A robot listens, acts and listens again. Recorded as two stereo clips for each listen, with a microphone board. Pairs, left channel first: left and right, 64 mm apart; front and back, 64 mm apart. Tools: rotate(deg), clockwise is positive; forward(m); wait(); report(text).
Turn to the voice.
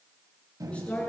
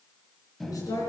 rotate(-15)
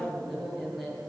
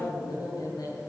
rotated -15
report("Facing the woman speaking.")